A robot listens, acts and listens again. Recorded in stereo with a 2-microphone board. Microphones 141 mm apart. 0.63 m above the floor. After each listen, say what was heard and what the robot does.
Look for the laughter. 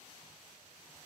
Keep listening.
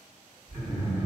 The laughter: about 70° right or 110° right. Turn 70° right.
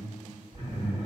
So it is at 35° right. Turn 35° right.
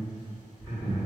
The laughter is now 15° left. Turn 15° left.
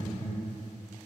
Facing the laughter.